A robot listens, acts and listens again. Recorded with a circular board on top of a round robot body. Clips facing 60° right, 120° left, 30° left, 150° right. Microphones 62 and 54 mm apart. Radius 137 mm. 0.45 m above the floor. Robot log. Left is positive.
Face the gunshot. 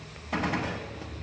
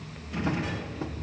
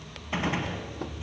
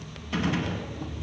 note: The gunshot: 40° right.
cmd yaw -40
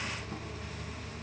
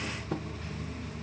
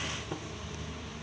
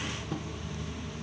end: Facing where the gunshot came from. I can't hear it now.